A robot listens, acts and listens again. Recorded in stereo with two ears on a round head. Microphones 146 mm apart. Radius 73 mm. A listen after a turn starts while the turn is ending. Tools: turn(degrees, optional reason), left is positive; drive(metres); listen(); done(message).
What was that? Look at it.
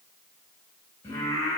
turn(degrees=20, reason="The singing: about 20° left or 160° left.")
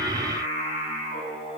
turn(degrees=35, reason="The singing: about 35° left or 145° left.")
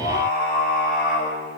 turn(degrees=115, reason="So it is at 115° left.")
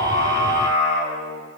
turn(degrees=-10, reason="The singing is now 10° right.")
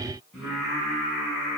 done("Facing the singing.")